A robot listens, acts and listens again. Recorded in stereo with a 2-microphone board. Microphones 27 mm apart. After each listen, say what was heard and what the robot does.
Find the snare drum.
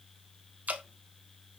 Keep listening.
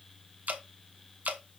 Keep listening.
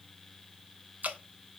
I can't make out a snare drum, only dripping.